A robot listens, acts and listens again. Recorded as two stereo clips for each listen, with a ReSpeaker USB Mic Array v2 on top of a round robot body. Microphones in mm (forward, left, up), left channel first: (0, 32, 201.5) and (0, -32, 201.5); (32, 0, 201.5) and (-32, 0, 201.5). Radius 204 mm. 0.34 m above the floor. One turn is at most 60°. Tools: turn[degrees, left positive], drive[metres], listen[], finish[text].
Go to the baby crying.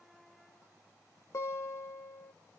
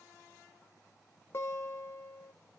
Action: listen[]
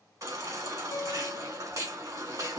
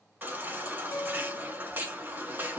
Thought: The baby crying: 120° right.
Action: turn[-60]
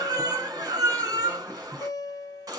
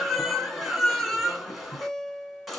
Thought: The baby crying is now 90° right.
Action: turn[-60]
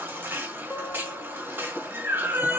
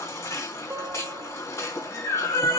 Thought: The baby crying is now 35° right.
Action: turn[-35]
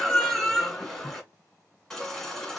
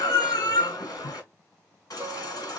Action: drive[1.0]
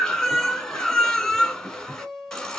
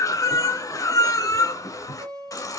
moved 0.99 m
Thought: The baby crying is now 10° left.
Action: turn[10]
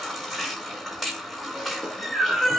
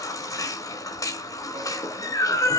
Action: drive[1.0]
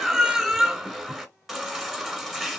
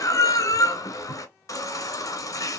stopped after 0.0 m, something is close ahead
Action: finish[I am next to the baby crying.]